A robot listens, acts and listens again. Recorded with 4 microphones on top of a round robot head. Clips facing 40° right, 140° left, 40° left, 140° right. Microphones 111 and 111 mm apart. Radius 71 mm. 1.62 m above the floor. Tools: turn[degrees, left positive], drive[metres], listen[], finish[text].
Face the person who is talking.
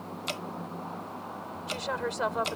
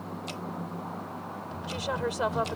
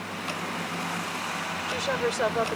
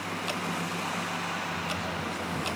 Thought: The woman speaking: 60° left.
Action: turn[60]
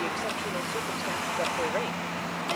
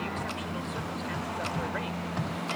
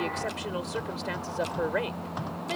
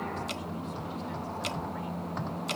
Action: listen[]
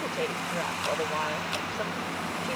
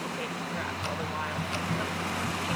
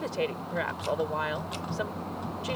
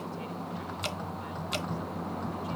Thought: The woman speaking is now 20° left.
Action: turn[20]
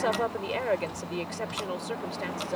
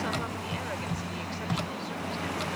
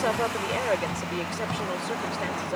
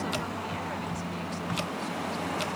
Action: finish[Facing the woman speaking.]